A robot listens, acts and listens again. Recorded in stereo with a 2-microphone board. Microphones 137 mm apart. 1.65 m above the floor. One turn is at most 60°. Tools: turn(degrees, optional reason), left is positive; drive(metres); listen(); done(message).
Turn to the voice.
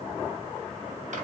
listen()
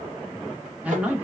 turn(degrees=-30)
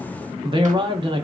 turn(degrees=-60, reason="So it is at 145° right.")
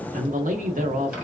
turn(degrees=-60, reason="The man speaking is now 75° right.")
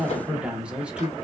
done("Found it: a man speaking, straight ahead, under 1 m away.")